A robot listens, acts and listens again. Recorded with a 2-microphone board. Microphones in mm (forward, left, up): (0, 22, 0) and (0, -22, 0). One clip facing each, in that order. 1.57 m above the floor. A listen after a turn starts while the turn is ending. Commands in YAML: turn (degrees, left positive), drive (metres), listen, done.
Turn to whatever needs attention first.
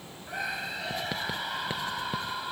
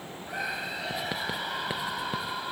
turn: -30
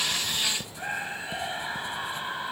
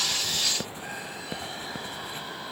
turn: 25
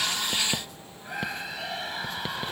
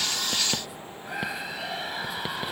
done: "Found it: a scream, straight ahead."